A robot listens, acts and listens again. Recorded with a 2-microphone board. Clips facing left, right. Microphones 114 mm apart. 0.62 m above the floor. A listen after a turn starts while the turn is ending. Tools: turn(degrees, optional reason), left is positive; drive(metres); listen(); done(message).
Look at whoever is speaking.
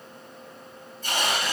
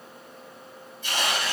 listen()
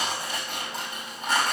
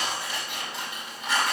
listen()
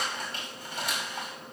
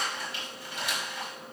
done("I can't make out anyone speaking, only tearing paper.")